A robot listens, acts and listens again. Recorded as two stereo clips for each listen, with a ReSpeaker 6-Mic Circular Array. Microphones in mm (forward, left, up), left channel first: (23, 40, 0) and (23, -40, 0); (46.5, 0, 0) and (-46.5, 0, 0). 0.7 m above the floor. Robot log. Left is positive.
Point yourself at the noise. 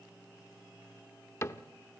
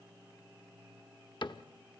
note: The cupboard door: 35° left.
cmd yaw +35
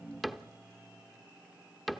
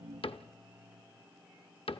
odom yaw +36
end: Facing the cupboard door.